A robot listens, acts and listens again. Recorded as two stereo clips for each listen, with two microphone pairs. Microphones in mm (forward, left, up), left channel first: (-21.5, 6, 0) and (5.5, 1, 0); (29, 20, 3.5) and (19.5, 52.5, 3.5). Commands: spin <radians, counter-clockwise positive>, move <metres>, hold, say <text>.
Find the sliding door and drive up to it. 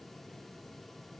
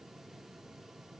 hold
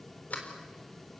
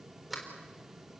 spin -2.88
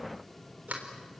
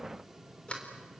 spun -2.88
spin -0.35
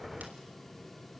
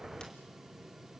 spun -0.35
hold
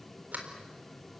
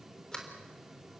move 1.0
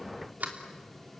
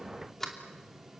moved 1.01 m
move 1.0
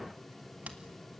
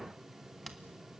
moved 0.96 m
spin 0.26
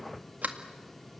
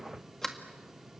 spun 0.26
move 1.0
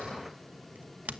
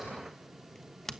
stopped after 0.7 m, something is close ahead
say I am next to the sliding door.